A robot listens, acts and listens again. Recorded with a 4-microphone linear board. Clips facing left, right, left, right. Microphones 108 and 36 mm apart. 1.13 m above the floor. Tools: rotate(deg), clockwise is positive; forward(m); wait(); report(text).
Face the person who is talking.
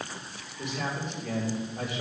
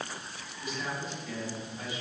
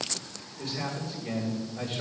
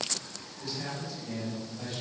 rotate(-90)
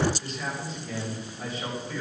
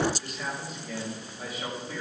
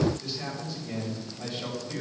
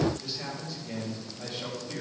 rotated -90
report("Facing the man speaking, over 4 m away.")